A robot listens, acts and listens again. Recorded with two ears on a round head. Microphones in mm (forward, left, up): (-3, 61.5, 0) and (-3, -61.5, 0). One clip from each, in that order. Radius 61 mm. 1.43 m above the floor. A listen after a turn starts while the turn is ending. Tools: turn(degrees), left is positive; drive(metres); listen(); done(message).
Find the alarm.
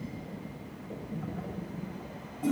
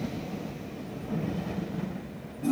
listen()
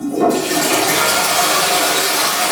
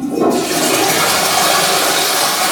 listen()
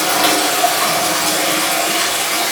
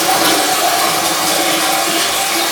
done("I can't make out an alarm to turn to.")